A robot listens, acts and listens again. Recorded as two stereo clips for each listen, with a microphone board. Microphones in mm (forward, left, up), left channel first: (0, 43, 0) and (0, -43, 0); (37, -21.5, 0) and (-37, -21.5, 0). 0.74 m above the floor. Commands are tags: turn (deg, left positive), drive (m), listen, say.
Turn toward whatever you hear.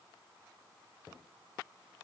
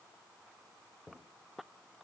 <listen/>
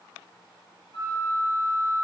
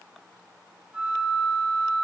<turn deg="110"/>
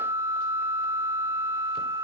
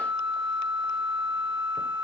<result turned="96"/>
<turn deg="10"/>
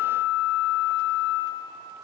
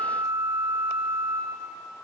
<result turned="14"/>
<say>Facing the flute, 2 to 4 m away.</say>